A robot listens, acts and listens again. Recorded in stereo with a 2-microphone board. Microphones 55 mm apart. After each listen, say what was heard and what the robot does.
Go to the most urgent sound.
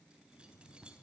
Keep listening.
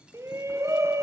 The shout: about 70° right or 110° right. Turn 70° right.
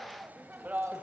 So it is at 35° right. Turn 35° right.
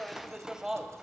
The shout is now 10° right. Turn 10° right.
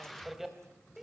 Drive 1.0 m forward.
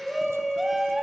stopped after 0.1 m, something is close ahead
Blocked. The shout is further on, straight ahead.